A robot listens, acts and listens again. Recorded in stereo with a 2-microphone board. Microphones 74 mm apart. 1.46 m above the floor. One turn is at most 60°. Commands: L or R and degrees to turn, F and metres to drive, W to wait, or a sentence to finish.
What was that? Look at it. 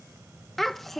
L30
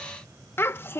L60
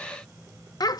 L60
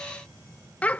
L20
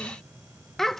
Facing the child speaking.